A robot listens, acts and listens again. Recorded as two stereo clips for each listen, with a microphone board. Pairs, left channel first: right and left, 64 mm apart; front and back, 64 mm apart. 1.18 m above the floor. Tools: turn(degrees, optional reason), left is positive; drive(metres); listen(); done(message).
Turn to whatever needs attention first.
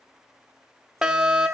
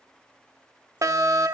turn(degrees=170, reason="The fire alarm: 170° left.")
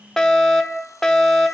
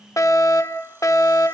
done("Found it: a fire alarm, straight ahead, 1 to 2 m away.")